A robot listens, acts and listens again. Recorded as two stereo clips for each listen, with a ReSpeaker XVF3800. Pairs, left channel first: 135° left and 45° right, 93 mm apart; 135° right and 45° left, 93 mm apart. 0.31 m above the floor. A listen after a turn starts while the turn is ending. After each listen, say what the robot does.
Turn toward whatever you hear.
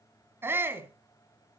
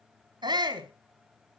Turn 15° left.
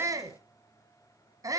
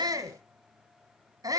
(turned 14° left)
Found it: a shout, straight ahead, 2 to 4 m away.